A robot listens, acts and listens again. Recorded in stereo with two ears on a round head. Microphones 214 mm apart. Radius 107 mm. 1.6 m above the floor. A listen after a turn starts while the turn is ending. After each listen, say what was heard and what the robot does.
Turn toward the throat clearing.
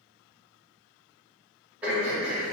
Turn 30° right.
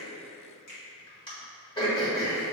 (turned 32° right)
So it is at 25° left. Turn 25° left.
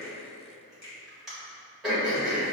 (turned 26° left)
Facing the throat clearing, 1 to 2 m away.